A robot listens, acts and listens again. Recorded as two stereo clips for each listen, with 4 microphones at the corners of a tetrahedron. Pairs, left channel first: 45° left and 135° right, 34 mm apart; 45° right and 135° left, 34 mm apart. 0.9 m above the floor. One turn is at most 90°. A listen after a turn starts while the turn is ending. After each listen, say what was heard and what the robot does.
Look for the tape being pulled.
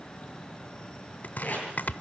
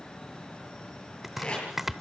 The tape being pulled: 10° left. Turn 10° left.
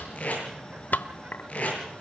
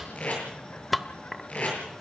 Found it: tape being pulled, straight ahead, over 4 m away.